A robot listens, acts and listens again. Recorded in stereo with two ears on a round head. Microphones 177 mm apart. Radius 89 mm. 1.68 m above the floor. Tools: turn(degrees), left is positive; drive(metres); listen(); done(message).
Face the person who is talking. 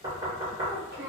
turn(degrees=-45)
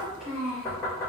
done("Found it: a child speaking, straight ahead, 1 to 2 m away.")